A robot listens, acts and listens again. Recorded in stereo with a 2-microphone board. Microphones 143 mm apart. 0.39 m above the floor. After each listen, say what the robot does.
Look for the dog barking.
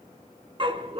Turn 40° right.
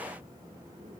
Keep listening.
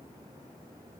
Keep listening.
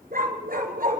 Turn 100° right.
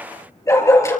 Turn 20° left.
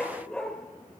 Found it: a dog barking, straight ahead, over 4 m away.